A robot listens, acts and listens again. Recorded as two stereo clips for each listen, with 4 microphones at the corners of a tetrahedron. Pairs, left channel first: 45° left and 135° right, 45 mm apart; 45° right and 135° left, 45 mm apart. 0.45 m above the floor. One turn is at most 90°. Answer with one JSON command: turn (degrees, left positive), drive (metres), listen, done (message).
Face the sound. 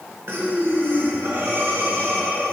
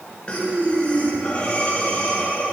{"turn": -90}
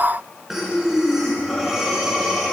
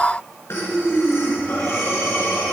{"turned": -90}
{"turn": -55}
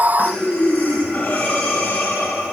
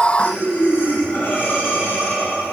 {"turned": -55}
{"done": "Facing the breathing."}